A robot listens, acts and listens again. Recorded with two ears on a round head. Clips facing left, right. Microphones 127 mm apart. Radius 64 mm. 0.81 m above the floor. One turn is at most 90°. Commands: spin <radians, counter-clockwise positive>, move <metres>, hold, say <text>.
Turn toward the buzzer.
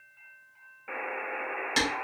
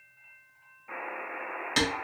spin 1.57
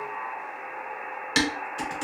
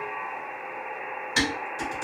spin -0.26
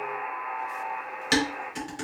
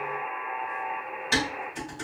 say Found it: a buzzer, straight ahead.